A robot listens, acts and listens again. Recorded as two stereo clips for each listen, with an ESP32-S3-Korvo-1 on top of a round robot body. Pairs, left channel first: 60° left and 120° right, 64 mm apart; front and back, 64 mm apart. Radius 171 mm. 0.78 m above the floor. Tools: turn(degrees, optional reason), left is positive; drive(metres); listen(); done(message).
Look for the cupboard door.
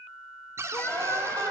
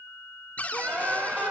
turn(degrees=-70, reason="The cupboard door: 70° right.")
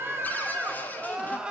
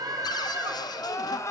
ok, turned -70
done("Found it: a cupboard door, straight ahead.")